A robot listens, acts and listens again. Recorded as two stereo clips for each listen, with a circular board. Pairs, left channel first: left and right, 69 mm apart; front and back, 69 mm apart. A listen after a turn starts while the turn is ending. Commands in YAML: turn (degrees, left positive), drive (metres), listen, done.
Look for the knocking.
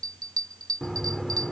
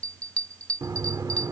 turn: 180
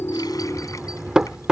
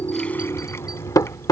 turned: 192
turn: -15
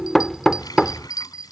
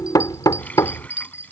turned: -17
done: "Facing the knocking."